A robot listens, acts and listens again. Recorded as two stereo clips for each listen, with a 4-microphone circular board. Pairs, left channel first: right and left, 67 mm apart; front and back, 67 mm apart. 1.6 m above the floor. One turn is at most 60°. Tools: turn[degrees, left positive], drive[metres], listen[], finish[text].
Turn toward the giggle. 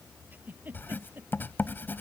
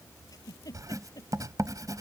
Thought: The giggle: 25° left.
Action: turn[25]
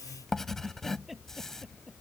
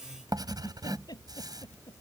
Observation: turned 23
Action: finish[Found it: a giggle, straight ahead.]